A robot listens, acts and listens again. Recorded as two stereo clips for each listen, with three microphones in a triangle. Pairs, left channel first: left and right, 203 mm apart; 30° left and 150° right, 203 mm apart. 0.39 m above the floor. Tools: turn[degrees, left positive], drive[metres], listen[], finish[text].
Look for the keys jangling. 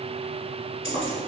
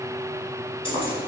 Thought: The keys jangling: 95° left.
Action: turn[95]
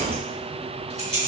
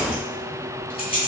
Thought: The keys jangling is now 30° right.
Action: turn[-30]
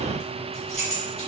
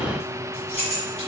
Thought: The keys jangling is now 30° right.
Action: turn[-30]
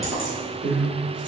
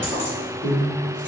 Action: finish[Found it: keys jangling, straight ahead, over 4 m away.]